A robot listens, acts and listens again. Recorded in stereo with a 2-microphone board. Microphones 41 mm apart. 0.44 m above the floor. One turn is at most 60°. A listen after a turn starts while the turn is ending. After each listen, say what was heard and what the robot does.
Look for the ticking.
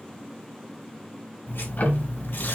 The ticking: about 45° left or 135° left. Turn 45° left.
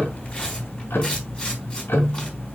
So it is at 85° left. Turn 60° left.
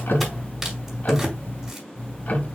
The ticking is now 45° left. Turn 45° left.
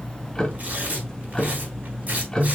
The ticking is now 15° left. Turn 15° left.
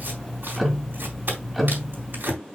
Found it: ticking, straight ahead, 1 to 2 m away.